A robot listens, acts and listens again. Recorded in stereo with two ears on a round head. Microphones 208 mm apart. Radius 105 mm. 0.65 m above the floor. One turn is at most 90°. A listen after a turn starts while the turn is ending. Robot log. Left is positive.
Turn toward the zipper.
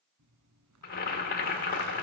note: The zipper: about 75° right or 105° right.
cmd yaw -75
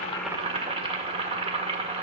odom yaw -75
cmd idle
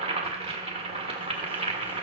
cmd idle
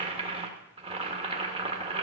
end: I heard a zipper, but can't make it out now. It was about straight ahead or 30° right.